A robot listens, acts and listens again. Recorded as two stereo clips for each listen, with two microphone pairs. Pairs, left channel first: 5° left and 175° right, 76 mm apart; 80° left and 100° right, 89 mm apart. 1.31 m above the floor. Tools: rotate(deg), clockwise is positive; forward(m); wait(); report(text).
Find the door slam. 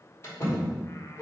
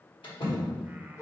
rotate(-60)
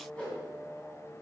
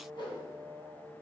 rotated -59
report("I heard a door slam from this way, but can't make it out now.")